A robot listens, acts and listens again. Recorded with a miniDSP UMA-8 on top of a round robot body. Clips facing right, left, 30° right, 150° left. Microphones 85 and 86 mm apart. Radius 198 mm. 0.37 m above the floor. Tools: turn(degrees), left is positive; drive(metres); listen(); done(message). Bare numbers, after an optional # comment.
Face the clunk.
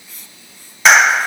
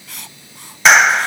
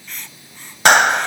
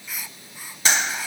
listen()
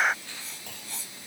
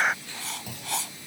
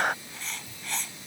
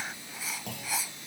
# The clunk: 175° left.
turn(175)
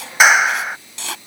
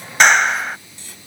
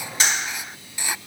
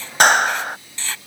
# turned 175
done("Facing where the clunk came from. I can't hear it now.")